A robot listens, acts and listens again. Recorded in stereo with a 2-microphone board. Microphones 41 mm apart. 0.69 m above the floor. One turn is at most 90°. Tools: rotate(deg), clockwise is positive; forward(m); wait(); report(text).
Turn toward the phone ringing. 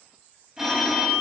rotate(30)
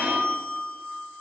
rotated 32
rotate(90)
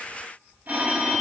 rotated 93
rotate(40)
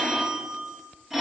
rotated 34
report("Found it: a phone ringing, straight ahead.")